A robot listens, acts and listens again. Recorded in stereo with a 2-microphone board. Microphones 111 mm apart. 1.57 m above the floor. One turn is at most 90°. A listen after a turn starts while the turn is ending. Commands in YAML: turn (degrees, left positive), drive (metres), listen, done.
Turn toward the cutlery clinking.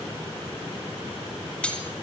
turn: 30
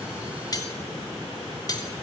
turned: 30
turn: 90
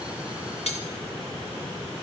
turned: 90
turn: 80
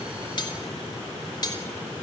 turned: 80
turn: 40
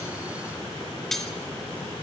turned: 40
done: "Found it: cutlery clinking, straight ahead, 2 to 4 m away."